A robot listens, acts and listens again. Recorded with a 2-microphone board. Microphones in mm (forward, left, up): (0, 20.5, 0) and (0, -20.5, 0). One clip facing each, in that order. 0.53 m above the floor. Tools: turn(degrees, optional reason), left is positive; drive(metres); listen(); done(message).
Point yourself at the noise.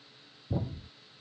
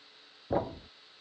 turn(degrees=-55, reason="The thud: about 55° right or 125° right.")
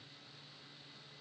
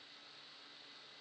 listen()
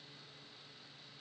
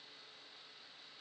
done("I heard a thud, but can't make it out now. It was about straight ahead or 70° right.")